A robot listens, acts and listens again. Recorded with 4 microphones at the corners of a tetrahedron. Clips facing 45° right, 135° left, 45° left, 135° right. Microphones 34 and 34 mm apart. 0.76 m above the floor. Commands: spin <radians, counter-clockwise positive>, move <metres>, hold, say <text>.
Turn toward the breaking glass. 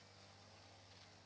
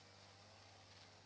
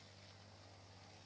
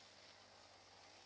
hold
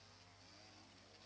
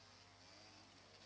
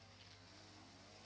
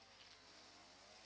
hold
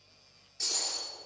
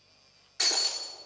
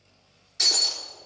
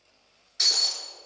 spin 2.53
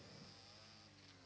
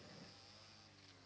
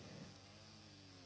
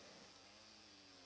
say Facing where the breaking glass came from. I can't hear it now.